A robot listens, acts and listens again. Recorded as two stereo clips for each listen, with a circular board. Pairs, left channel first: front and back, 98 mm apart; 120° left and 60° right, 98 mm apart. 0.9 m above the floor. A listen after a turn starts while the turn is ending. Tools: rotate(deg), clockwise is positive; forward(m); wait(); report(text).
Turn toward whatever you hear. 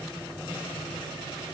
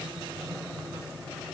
wait()
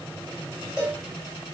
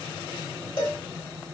rotate(-100)
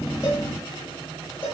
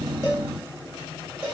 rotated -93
rotate(-10)
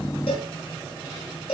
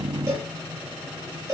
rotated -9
report("Facing the cowbell, 1 to 2 m away.")